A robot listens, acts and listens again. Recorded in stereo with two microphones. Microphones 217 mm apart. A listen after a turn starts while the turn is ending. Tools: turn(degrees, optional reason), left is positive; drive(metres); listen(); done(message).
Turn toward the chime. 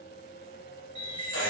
turn(degrees=20, reason="The chime: about 20° left or 160° left.")
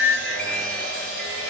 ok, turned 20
listen()
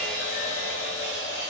listen()
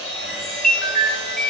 done("Found it: a chime, straight ahead.")